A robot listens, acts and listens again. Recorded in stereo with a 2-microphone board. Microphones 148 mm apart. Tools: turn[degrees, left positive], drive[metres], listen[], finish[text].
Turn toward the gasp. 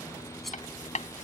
Action: listen[]
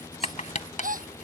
Thought: The gasp: about 70° right or 110° right.
Action: turn[-70]
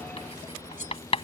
Action: listen[]
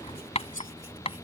Action: finish[I heard a gasp, but can't make it out now. It was about straight ahead or 40° right.]